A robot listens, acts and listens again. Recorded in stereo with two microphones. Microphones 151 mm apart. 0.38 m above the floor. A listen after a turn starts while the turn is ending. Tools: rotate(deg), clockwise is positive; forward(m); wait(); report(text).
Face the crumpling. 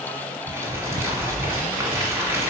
rotate(15)
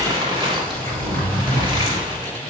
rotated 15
rotate(145)
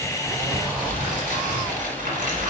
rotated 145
rotate(60)
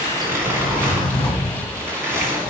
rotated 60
rotate(15)
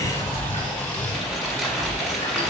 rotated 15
report("Found it: crumpling, straight ahead.")